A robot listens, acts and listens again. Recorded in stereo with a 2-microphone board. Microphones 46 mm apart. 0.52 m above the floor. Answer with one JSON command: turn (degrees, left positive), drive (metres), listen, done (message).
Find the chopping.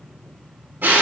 {"listen": true}
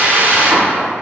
{"listen": true}
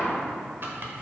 {"turn": -50}
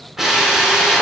{"listen": true}
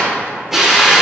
{"listen": true}
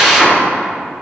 {"done": "I heard chopping, but can't make it out now. It was about straight ahead or 80° right."}